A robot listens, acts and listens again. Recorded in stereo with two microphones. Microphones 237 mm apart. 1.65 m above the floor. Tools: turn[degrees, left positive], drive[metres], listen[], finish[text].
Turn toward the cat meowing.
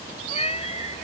Thought: The cat meowing: about 25° left or 155° left.
Action: turn[25]
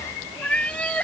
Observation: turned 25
Action: finish[Found it: a cat meowing, straight ahead.]